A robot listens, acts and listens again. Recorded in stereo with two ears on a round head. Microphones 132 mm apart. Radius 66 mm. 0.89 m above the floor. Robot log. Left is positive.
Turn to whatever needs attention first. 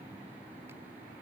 cmd idle
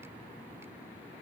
cmd idle
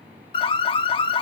note: The alarm: about 35° left or 145° left.
cmd yaw +35
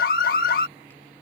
note: So it is at 110° left.
cmd yaw +110
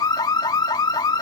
note: The alarm is now 25° left.
cmd yaw +25
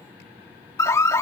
note: The alarm is now 20° left.
cmd yaw +20
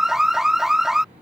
end: Found it: an alarm, straight ahead.